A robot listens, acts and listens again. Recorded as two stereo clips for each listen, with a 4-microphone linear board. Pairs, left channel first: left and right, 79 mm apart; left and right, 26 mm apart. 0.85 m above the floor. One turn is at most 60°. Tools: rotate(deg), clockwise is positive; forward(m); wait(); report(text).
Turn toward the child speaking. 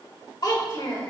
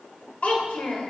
rotate(-60)
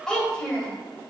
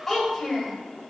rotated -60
rotate(-10)
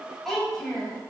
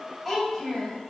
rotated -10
report("Facing the child speaking, 2 to 4 m away.")